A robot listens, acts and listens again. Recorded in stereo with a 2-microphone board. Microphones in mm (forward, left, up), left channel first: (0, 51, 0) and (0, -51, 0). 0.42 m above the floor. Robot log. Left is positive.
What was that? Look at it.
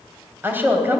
note: The woman speaking: about 20° right or 160° right.
cmd yaw -20
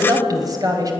note: So it is at 140° right.
cmd yaw -140
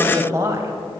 note: The woman speaking is now 35° right.
cmd yaw -35
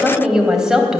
end: Found it: a woman speaking, straight ahead, 2 to 4 m away.